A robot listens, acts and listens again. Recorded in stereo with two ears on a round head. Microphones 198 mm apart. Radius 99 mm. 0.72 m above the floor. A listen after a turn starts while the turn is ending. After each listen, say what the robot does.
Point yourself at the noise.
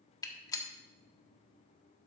Turn 15° left.
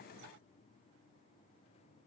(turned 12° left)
Keep listening.
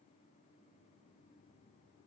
I heard a gunshot, but can't make it out now. It was about 5° left or 150° left.